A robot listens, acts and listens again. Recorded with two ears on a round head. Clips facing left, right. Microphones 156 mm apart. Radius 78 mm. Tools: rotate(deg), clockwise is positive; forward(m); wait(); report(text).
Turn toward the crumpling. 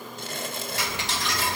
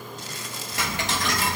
rotate(-50)
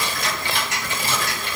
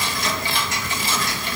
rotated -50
wait()
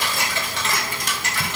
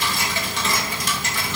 wait()
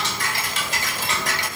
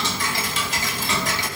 report("I heard crumpling, but can't make it out now. It was about straight ahead or 80° left.")